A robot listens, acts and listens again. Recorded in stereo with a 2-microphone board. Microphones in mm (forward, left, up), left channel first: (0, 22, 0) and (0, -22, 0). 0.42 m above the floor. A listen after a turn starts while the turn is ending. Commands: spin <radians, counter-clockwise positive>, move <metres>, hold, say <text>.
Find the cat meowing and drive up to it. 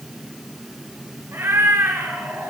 spin -1.57
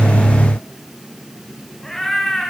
spin 0.17
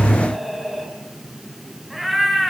move 1.0
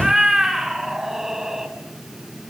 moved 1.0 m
spin -0.17
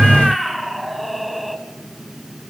move 1.0
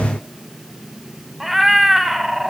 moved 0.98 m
move 1.0
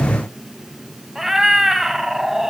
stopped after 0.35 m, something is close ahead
say Arrived at the cat meowing, straight ahead.